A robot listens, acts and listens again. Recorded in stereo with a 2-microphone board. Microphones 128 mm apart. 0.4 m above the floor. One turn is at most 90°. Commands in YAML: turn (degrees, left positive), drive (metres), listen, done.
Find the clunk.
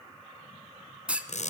turn: -30
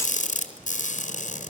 listen: true
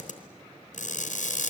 done: "I heard a clunk, but can't make it out now. It was about 20° left or 140° right."